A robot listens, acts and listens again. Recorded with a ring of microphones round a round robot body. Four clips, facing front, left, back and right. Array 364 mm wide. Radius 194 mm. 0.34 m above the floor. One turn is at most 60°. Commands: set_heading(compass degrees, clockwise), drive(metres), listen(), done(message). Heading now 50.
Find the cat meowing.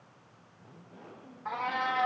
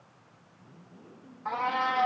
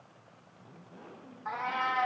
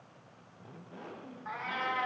set_heading(350)
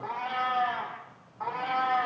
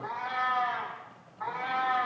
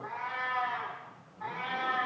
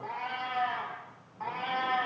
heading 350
set_heading(10)
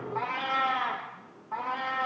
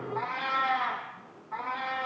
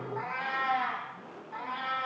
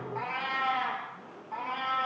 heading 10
set_heading(25)
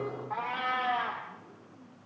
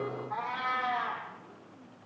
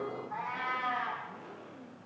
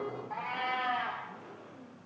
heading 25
set_heading(35)
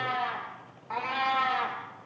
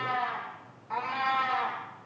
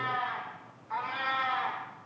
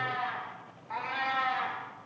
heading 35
done("Found it: a cat meowing, straight ahead.")